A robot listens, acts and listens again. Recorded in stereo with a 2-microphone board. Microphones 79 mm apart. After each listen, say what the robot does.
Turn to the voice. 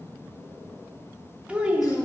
Turn 15° right.
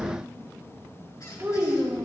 Turn 150° right.
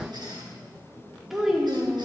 Facing the child speaking.